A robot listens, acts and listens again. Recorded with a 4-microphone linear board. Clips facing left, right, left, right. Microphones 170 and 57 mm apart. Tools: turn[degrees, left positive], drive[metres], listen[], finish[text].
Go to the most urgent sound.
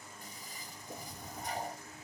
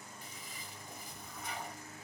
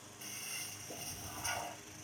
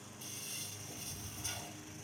Action: listen[]
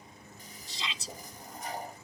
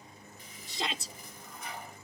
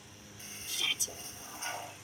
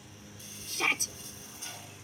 Thought: The shout: about 55° right or 125° right.
Action: turn[-55]
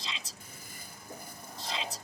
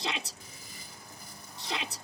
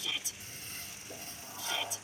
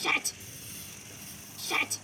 Thought: So it is at 70° right.
Action: turn[-70]
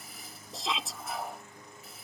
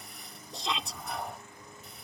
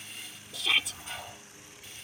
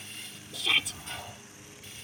Action: drive[1.0]
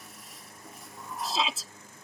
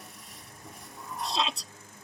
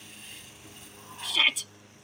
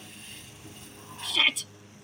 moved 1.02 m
Action: drive[1.0]
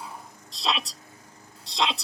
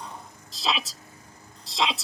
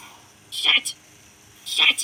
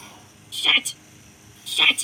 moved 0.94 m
Action: drive[1.0]
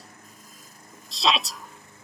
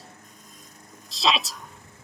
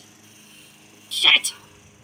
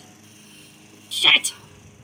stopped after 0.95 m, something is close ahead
Action: finish[Arrived at the shout, straight ahead.]